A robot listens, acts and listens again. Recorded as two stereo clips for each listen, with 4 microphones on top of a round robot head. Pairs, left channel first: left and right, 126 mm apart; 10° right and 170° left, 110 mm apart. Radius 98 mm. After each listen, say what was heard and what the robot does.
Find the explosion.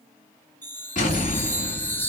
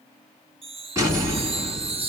The explosion: 110° left. Turn 110° left.
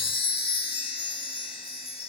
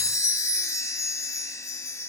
Facing where the explosion came from. I can't hear it now.